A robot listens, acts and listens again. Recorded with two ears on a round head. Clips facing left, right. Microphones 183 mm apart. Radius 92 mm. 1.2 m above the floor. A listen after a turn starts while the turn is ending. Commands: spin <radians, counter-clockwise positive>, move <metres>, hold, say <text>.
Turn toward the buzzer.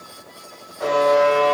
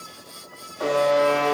spin -0.79
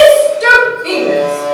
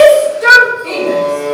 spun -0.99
spin 0.17
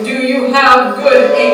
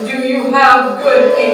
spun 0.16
hold
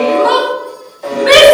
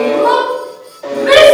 say Found it: a buzzer, straight ahead, 2 to 4 m away.